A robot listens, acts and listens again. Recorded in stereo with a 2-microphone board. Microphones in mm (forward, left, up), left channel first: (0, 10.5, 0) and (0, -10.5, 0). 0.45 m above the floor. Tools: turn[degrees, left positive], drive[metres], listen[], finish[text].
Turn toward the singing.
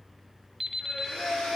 Thought: The singing: about 70° left or 110° left.
Action: turn[70]
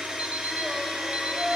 Action: finish[Found it: singing, straight ahead.]